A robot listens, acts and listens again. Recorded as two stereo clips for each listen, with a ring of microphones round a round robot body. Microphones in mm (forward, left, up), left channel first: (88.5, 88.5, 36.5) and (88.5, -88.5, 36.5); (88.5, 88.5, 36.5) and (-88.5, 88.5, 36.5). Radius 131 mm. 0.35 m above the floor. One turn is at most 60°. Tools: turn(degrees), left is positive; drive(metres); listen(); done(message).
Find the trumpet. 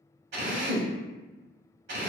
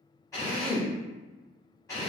listen()
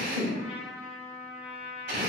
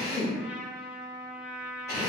turn(degrees=60)
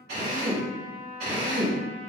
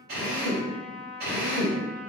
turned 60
turn(degrees=40)
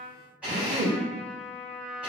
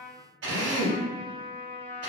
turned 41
done("Facing the trumpet.")